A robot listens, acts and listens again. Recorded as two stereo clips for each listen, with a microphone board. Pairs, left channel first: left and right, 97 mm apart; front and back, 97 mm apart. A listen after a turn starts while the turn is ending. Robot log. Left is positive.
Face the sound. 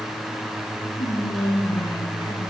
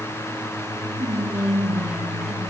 note: The whispering: 105° left.
cmd yaw +105
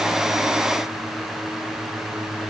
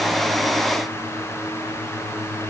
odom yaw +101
cmd idle
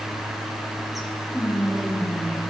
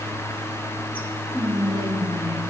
end: Facing the whispering, 1 to 2 m away.